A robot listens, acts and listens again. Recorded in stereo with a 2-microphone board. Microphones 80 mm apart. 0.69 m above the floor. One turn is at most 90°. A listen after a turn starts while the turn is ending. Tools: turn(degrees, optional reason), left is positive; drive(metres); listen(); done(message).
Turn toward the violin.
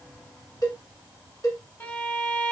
turn(degrees=25, reason="The violin: about 25° left or 155° left.")
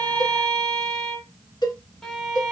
done("Facing the violin, 1 to 2 m away.")